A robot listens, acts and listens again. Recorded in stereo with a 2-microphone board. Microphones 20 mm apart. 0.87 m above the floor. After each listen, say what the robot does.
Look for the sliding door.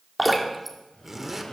Turn 55° left.
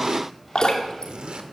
Found it: a sliding door, straight ahead, over 4 m away.